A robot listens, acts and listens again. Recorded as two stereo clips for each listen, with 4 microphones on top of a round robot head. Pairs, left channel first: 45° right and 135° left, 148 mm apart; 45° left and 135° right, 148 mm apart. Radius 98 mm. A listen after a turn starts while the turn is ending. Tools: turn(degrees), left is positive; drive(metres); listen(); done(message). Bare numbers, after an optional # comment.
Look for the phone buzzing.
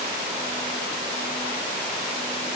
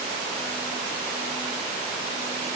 listen()
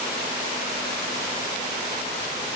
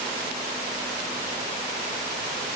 listen()
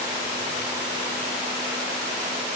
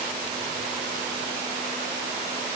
done("I can't make out a phone buzzing.")